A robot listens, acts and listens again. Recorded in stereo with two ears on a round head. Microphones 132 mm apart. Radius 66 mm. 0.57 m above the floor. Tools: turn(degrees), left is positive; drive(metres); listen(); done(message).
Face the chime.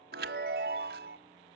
turn(degrees=-75)
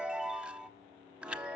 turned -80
done("Facing the chime.")